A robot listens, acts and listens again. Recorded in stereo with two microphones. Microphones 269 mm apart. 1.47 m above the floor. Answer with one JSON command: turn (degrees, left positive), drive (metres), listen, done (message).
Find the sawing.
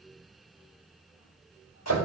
{"listen": true}
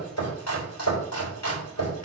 {"listen": true}
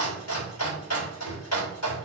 {"done": "I can't make out sawing to turn to."}